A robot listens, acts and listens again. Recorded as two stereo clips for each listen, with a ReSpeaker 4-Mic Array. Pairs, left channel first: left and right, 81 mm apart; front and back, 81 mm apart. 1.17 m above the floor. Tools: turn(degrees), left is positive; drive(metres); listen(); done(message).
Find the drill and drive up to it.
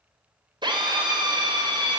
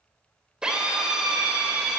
turn(degrees=-100)
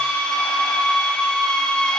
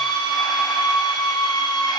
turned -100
turn(degrees=10)
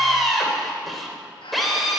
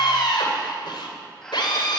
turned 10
drive(metres=1.0)
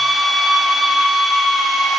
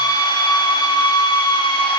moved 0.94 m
drive(metres=1.0)
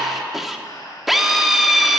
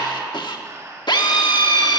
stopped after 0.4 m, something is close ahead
done("I am next to the drill.")